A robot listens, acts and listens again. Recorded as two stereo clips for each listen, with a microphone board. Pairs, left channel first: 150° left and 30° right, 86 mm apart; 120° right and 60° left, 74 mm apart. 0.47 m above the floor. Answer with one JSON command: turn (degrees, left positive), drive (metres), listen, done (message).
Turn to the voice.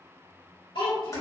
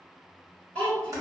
{"turn": 165}
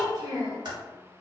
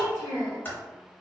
{"done": "Facing the child speaking."}